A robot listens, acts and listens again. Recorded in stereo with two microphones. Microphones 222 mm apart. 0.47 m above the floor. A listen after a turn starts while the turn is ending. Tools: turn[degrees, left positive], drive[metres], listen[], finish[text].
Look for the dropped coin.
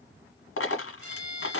Action: turn[90]
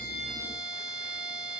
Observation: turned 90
Action: finish[Facing where the dropped coin came from. I can't hear it now.]